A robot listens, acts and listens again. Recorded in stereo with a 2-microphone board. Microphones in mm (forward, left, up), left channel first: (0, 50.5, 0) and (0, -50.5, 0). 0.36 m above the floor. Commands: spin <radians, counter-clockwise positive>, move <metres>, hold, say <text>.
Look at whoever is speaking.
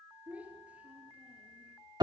spin -0.52
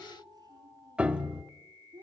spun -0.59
spin -2.44
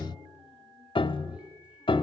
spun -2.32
spin -0.17
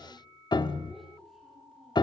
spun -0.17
hold
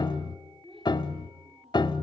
say Found it: a child speaking, straight ahead, over 4 m away.